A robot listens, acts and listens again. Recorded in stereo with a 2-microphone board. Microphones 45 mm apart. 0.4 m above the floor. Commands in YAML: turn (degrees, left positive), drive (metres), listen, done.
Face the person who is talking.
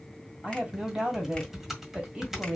turn: -20
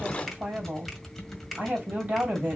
turn: -135
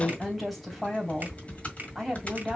done: "Facing the woman speaking, 2 to 4 m away."